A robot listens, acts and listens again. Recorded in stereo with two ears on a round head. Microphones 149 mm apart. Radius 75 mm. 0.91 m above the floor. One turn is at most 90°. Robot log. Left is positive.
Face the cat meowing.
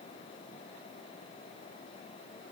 cmd idle
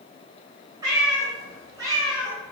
note: The cat meowing: about 25° right or 155° right.
cmd yaw -25
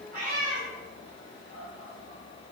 note: So it is at 130° right.
cmd yaw -90
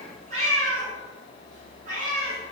note: The cat meowing is now 45° right.
cmd yaw -45
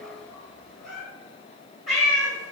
end: Facing the cat meowing, 1 to 2 m away.